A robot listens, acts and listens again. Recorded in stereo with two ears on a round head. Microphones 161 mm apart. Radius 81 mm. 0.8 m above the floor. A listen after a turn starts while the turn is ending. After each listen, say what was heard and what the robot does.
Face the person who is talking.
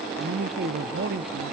The man speaking: about 60° right or 120° right. Turn 60° right.
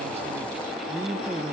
Found it: a man speaking, straight ahead, 1 to 2 m away.